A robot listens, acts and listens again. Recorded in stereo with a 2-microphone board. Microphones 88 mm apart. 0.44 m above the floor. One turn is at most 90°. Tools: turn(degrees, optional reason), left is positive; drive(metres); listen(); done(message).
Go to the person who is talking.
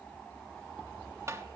listen()
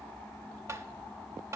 listen()
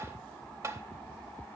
done("I can't make out anyone speaking to turn to.")